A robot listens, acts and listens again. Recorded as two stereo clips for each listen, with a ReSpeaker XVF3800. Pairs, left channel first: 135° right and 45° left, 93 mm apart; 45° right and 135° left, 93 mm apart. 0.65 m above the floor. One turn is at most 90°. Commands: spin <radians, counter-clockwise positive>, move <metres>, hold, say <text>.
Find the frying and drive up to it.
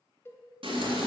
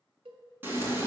spin 1.13
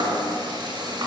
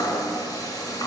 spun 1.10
move 1.0
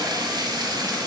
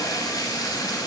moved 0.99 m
move 1.0
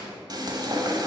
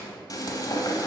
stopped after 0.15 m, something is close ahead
say Arrived at the frying, straight ahead.